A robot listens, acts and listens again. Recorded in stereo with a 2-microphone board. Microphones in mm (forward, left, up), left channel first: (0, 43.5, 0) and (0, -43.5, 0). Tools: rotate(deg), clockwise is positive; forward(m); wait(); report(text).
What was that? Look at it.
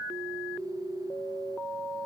wait()
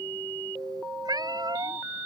rotate(50)
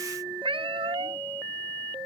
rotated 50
rotate(80)
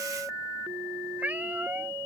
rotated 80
rotate(15)
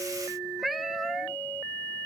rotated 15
report("Facing the cat meowing.")